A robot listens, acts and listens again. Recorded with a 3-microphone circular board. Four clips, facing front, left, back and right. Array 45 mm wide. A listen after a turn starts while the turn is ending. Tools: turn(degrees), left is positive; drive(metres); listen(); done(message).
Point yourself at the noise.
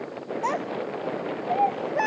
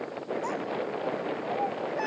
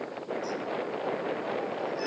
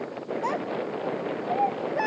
turn(degrees=-25)
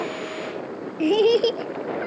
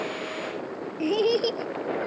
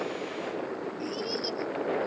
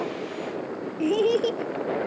done("Found it: a child speaking, straight ahead.")